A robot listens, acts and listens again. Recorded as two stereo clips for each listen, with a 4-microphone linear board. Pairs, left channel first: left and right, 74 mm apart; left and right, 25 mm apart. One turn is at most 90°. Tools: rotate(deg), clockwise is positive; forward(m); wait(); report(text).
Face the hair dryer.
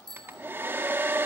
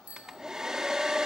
rotate(30)
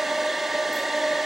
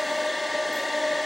report("Facing the hair dryer.")